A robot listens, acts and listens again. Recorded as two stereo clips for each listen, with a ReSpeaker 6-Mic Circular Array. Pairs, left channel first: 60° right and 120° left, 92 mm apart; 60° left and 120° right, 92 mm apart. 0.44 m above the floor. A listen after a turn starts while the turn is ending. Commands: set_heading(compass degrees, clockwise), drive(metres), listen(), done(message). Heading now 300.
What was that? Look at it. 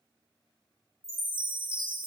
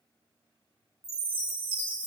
set_heading(65)
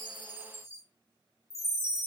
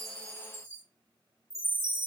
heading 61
done("Facing the chime.")